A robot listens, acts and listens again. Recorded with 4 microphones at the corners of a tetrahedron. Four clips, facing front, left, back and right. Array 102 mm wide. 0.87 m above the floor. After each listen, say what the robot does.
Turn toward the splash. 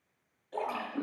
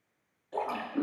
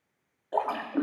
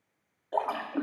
Turn 140° right.
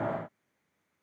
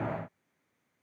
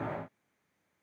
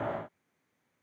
I heard a splash from this way, but can't make it out now.